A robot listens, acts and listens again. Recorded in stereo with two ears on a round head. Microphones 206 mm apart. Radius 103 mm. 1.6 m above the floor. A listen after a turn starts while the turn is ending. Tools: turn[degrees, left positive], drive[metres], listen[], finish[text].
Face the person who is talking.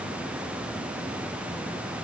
Action: listen[]
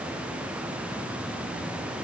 Action: listen[]
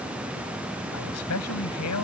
Action: turn[90]
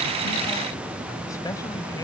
Action: listen[]
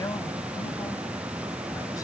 Thought: The man speaking is now 15° left.
Action: turn[15]
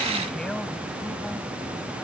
Action: listen[]
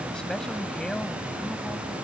Action: finish[Facing the man speaking.]